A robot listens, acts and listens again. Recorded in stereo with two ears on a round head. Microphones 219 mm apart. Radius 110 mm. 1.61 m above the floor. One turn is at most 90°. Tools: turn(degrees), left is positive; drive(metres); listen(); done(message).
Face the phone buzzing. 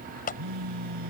turn(degrees=-90)
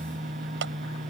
done("Found it: a phone buzzing, straight ahead.")